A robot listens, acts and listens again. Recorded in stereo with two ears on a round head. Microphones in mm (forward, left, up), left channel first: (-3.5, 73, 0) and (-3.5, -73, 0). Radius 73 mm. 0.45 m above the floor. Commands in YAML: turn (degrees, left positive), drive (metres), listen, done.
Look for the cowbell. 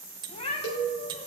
turn: 90
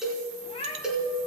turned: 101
done: "Found it: a cowbell, straight ahead, 2 to 4 m away."